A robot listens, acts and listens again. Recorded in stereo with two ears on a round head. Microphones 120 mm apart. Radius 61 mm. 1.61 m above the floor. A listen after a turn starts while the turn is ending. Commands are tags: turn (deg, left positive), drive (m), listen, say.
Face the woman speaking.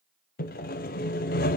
<listen/>
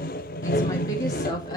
<turn deg="30"/>
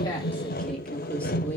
<turn deg="15"/>
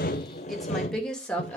<turn deg="10"/>
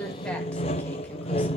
<listen/>
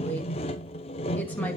<turn deg="10"/>
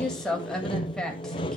<say>Found it: a woman speaking, straight ahead, 2 to 4 m away.</say>